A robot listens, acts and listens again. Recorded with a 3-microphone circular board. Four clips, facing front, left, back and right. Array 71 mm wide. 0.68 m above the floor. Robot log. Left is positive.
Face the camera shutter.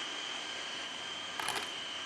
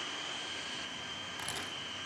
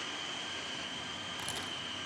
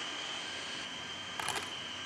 note: The camera shutter: 40° right.
cmd yaw -40
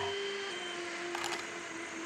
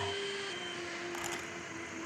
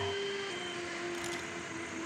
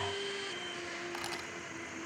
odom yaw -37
end: Found it: a camera shutter, straight ahead, 2 to 4 m away.